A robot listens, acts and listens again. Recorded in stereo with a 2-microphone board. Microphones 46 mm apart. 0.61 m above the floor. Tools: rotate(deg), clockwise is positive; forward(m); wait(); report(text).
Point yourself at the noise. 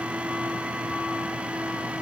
wait()
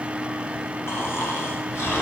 rotate(-65)
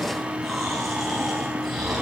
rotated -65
report("Facing the snoring, 2 to 4 m away.")